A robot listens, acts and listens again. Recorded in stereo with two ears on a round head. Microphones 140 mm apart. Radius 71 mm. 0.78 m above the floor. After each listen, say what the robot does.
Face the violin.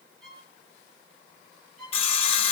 Turn 30° left.
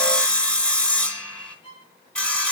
Turn 145° left.
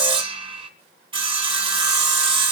Keep listening.
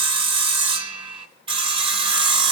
Keep listening.
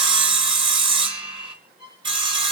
Found it: a violin, straight ahead, over 4 m away.